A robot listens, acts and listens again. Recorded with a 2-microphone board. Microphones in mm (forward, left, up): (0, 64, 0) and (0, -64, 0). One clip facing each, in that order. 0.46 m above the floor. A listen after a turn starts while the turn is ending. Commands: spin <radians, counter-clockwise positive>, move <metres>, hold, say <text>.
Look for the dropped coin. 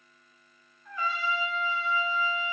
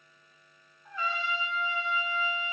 hold
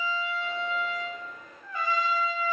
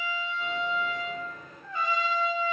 spin -0.96
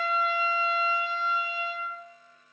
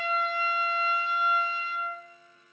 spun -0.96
hold
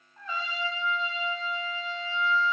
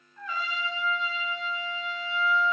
say I heard a dropped coin, but can't make it out now. It was about straight ahead or 70° right.